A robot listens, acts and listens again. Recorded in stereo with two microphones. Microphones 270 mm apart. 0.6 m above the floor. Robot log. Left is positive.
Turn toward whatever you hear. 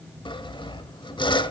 note: The sawing: about 20° left or 160° left.
cmd yaw +20
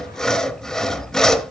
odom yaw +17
end: Facing the sawing, under 1 m away.